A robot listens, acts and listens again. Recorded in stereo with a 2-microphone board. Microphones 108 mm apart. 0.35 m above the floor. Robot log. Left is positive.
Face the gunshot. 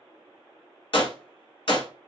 note: The gunshot: about 60° left or 120° left.
cmd yaw +60
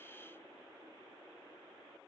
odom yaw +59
cmd idle
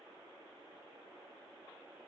end: I heard a gunshot, but can't make it out now. It was about 5° left or 60° left.